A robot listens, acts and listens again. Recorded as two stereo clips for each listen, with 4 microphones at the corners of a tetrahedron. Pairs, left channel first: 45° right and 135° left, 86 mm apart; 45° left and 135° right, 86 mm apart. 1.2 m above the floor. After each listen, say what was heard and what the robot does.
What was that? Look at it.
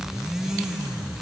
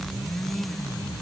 Keep listening.
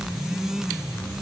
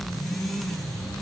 Keep listening.
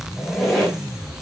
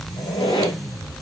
The squeak: 45° left. Turn 45° left.
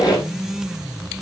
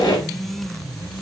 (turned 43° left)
Facing the squeak.